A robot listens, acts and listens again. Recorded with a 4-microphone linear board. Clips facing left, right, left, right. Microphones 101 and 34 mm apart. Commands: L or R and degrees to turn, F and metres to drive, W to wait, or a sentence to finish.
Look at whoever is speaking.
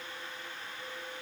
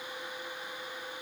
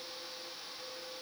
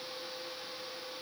W
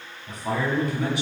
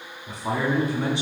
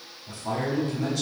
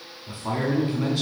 R30
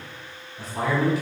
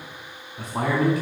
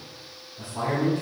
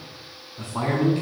R115
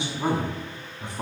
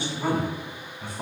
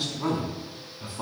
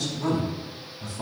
L20
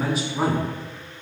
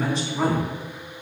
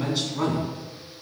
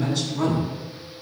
Found it: a man speaking, straight ahead.